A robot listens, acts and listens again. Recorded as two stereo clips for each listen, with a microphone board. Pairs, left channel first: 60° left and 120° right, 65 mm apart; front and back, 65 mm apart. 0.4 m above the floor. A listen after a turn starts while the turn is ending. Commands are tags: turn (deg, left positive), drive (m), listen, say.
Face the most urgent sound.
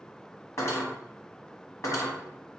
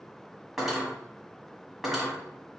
<listen/>
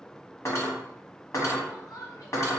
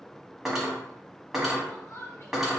<turn deg="45"/>
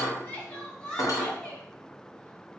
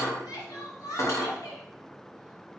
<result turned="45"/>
<turn deg="-15"/>
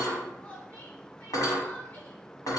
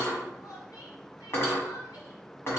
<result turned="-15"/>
<say>Facing the crying, 1 to 2 m away.</say>